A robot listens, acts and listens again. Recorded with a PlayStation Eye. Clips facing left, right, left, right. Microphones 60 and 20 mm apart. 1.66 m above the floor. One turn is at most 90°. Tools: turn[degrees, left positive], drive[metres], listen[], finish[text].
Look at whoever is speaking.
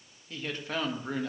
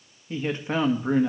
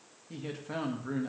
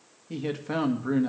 Thought: The man speaking: about 20° right or 160° right.
Action: turn[-20]
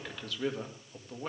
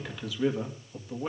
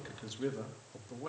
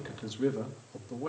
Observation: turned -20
Action: finish[Facing the man speaking.]